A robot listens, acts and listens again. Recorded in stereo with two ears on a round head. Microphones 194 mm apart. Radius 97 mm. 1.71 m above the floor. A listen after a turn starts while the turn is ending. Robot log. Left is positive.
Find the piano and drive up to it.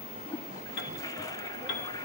note: The piano: about 50° left or 130° left.
cmd yaw +50
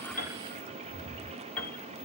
cmd fwd 1.0
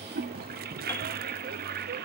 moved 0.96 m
cmd idle
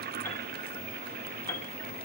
note: The piano is now 10° left.
cmd yaw +10
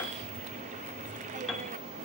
cmd fwd 1.0
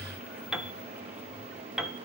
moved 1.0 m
cmd fwd 1.0
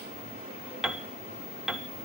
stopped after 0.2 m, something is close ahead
end: Arrived at the piano, straight ahead.